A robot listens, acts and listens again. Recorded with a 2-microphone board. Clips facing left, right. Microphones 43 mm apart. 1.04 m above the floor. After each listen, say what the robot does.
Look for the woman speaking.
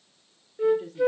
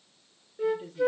Turn 50° left.
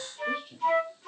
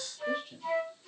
Facing the woman speaking.